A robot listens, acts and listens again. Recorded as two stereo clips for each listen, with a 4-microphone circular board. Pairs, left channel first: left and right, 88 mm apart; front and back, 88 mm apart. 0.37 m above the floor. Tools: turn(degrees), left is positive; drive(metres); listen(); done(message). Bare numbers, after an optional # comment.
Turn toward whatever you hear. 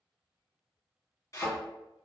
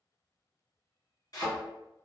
# The thud: 40° left.
turn(40)
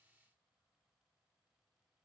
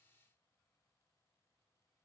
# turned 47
# Nothing new. It was at 10° right.
turn(-10)
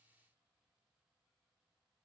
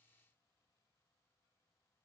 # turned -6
done("Facing where the thud came from. I can't hear it now.")